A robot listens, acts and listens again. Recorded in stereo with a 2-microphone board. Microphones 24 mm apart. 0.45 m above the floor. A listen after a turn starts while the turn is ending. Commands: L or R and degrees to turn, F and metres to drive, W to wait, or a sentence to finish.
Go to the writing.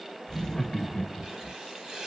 R35
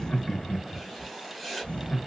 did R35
F1.0
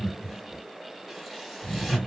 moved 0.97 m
W
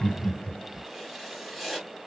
F1.0
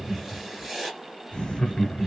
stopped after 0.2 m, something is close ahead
I am next to the writing.